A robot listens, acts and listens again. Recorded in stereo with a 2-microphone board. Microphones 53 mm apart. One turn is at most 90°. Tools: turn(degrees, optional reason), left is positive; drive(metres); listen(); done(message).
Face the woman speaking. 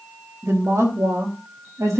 turn(degrees=-90)
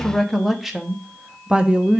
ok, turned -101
turn(degrees=-25, reason="So it is at 25° right.")
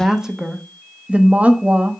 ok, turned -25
turn(degrees=-35, reason="The woman speaking is now 35° right.")
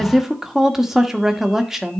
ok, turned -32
done("Found it: a woman speaking, straight ahead, 1 to 2 m away.")